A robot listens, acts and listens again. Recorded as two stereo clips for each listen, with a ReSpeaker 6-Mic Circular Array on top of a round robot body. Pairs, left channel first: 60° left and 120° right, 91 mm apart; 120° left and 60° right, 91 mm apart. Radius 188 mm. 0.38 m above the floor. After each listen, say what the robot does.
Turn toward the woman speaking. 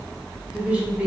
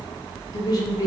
Turn 165° left.
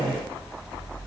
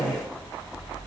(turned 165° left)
Turn 85° left.
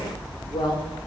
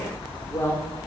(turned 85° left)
Turn 65° left.
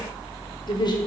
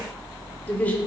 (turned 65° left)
Turn 50° left.
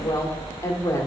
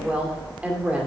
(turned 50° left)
Turn 15° left.
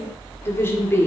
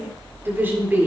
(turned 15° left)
Facing the woman speaking.